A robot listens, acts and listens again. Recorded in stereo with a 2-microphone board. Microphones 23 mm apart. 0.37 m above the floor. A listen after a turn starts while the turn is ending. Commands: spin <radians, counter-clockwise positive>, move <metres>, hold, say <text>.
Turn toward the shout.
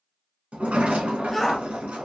spin 0.52
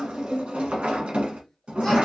hold
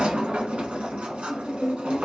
hold
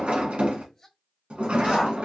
spin 2.53
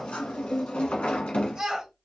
spin -0.70
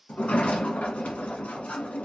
hold
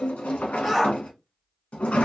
spin 0.17
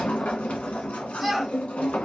say Found it: a shout, straight ahead, 1 to 2 m away.